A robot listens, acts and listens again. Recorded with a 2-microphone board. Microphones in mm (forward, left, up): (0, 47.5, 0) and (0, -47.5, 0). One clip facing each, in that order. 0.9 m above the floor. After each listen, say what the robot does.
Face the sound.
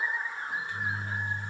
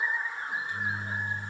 Turn 20° right.
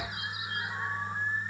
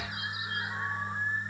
Turn 140° right.
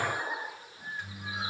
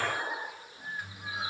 Found it: a microwave, straight ahead.